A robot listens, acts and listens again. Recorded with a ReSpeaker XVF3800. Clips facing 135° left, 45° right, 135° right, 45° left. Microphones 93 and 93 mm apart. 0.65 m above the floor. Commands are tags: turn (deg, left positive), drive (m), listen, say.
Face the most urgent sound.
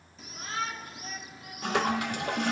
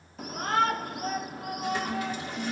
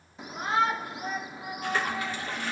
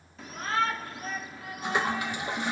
<turn deg="-65"/>
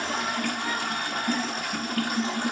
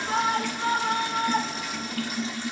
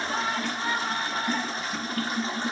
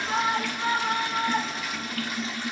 <turn deg="-15"/>
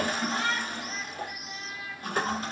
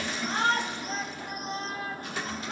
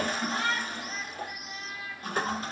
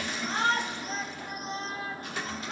<say>Found it: a shout, straight ahead, under 1 m away.</say>